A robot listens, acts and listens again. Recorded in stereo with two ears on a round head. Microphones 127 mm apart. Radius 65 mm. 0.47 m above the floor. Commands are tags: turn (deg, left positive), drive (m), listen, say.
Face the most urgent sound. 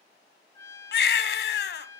<turn deg="90"/>
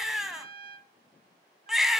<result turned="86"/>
<say>Found it: a baby crying, straight ahead, 1 to 2 m away.</say>